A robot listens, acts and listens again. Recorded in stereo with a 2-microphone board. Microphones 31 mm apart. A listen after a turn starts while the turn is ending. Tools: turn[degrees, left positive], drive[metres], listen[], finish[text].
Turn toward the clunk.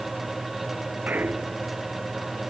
Thought: The clunk: about 55° right or 125° right.
Action: turn[-55]
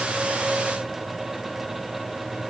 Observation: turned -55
Action: listen[]
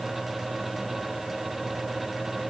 Action: finish[I heard a clunk, but can't make it out now. It was about straight ahead or 70° right.]